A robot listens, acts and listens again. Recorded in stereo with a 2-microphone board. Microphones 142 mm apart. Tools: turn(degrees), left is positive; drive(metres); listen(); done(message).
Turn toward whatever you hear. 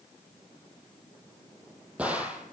turn(degrees=-30)
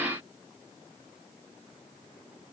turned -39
listen()
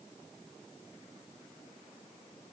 done("I heard a gunshot, but can't make it out now. It was about 30° left or 130° right.")